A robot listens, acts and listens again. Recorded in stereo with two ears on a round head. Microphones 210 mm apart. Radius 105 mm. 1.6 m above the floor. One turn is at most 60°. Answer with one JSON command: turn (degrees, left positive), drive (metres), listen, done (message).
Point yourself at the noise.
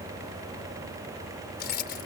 {"turn": 45}
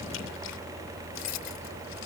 {"turn": 60}
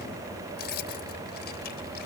{"turn": 45}
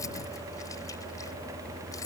{"turn": 15}
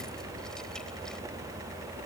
{"listen": true}
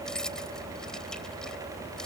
{"done": "Found it: keys jangling, straight ahead."}